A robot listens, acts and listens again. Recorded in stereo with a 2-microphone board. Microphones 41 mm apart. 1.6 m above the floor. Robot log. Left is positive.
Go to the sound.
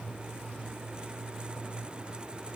cmd idle
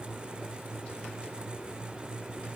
cmd idle
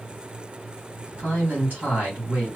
note: The man speaking: about 50° right or 130° right.
cmd yaw -50
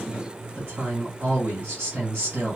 note: So it is at 85° right.
cmd yaw -85
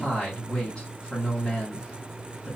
note: The man speaking is now 20° left.
cmd yaw +20
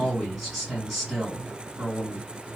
cmd fwd 1.0
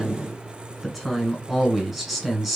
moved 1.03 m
cmd fwd 1.0
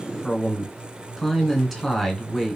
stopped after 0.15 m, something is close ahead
end: Arrived at the man speaking, straight ahead.